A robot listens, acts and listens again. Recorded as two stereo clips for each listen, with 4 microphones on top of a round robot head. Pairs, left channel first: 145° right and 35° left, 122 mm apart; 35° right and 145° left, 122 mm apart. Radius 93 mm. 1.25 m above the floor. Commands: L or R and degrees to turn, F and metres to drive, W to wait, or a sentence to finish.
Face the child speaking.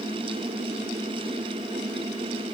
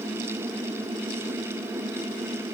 W
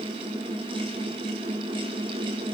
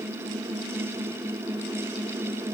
W
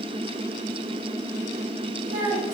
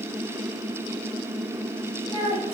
L15
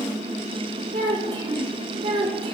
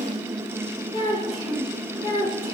Found it: a child speaking, straight ahead.